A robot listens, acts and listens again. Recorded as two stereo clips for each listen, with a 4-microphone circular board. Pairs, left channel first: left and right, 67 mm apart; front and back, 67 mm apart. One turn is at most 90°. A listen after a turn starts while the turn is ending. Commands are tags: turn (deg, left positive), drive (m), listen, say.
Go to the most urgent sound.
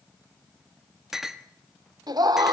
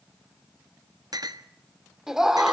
<turn deg="-90"/>
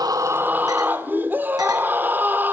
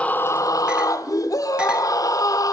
<turn deg="-30"/>
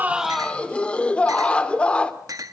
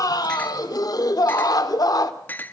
<turn deg="15"/>
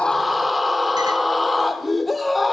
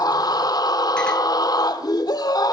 <drive m="1.0"/>
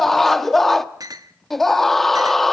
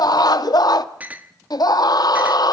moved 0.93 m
<drive m="1.0"/>
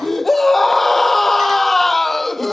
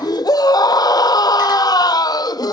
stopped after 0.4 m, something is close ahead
<say>I am next to the scream.</say>